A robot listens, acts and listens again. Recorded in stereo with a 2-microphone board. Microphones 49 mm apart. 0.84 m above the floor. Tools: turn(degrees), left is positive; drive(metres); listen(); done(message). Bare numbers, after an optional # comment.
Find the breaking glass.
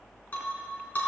# The breaking glass: about 35° left or 145° left.
turn(35)
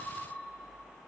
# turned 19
listen()
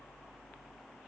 done("I heard breaking glass, but can't make it out now. It was about 20° left or 125° left.")